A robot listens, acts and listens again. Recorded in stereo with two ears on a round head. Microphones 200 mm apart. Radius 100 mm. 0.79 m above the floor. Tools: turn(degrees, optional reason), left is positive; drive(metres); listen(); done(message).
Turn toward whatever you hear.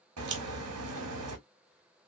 turn(degrees=-75, reason="The crack: about 75° right or 105° right.")
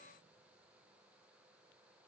listen()
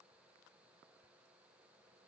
done("I heard a crack, but can't make it out now. It was about straight ahead or 30° right.")